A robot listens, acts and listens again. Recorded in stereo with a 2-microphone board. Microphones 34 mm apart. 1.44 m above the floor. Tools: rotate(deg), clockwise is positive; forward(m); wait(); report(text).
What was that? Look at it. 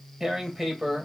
rotate(30)
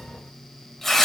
rotate(-15)
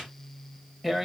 report("Found it: tearing paper, straight ahead, 1 to 2 m away.")